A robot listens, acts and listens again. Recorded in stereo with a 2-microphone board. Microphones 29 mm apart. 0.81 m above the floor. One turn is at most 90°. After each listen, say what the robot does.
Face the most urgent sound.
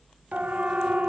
Turn 60° right.
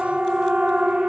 Turn 55° right.
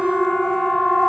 Found it: a siren, straight ahead, 2 to 4 m away.